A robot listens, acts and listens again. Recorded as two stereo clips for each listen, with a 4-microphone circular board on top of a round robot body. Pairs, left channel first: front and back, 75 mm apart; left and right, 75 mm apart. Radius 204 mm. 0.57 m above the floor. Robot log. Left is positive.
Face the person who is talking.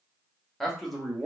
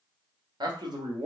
note: The man speaking: 90° right.
cmd yaw -90
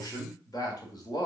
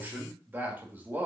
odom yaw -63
note: The man speaking is now 25° right.
cmd yaw -25
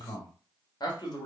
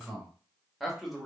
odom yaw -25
end: Found it: a man speaking, straight ahead, 1 to 2 m away.